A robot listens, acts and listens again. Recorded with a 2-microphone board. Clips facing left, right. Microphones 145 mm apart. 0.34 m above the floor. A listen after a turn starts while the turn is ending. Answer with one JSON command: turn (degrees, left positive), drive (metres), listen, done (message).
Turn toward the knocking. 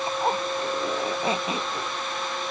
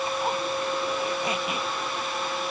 {"listen": true}
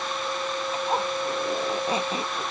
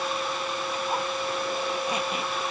{"listen": true}
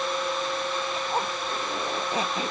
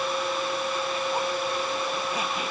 {"done": "I can't make out knocking, only a zipper."}